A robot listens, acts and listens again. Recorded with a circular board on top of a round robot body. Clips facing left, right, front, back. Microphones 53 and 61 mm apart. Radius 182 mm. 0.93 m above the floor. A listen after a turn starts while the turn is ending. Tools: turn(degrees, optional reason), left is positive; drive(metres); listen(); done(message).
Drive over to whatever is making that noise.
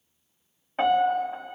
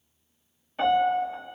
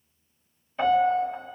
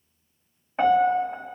turn(degrees=135, reason="The piano: 135° left.")
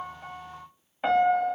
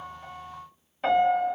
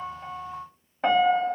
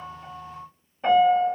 turn(degrees=10, reason="The piano is now 10° left.")
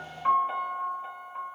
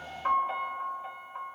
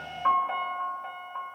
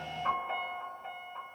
drive(metres=1.0)
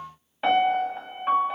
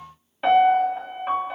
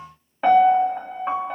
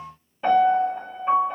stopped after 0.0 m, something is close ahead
done("Something is in my way. I am facing the piano but have not reached it.")